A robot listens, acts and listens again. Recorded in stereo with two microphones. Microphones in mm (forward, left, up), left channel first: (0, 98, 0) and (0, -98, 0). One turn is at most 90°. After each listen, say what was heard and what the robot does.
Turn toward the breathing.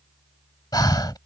The breathing: about 20° left or 160° left. Turn 20° left.
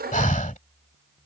So it is at 140° left. Turn 90° left.
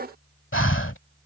The breathing is now 95° left. Turn 90° left.
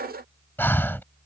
The breathing is now 10° left. Turn 10° left.
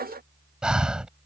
Facing the breathing.